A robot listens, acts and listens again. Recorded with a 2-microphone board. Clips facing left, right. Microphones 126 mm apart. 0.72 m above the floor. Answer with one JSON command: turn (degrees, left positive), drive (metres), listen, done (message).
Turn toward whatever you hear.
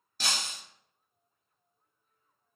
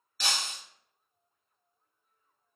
{"turn": 45}
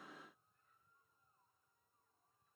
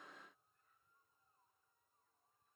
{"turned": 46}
{"listen": true}
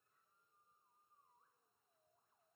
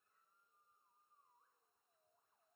{"done": "I heard breaking glass, but can't make it out now. It was about straight ahead or 90° left."}